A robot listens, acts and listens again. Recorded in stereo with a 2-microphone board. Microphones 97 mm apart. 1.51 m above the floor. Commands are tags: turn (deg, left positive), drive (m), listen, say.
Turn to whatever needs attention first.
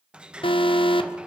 <turn deg="60"/>
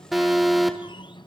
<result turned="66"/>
<say>Facing the alarm, 1 to 2 m away.</say>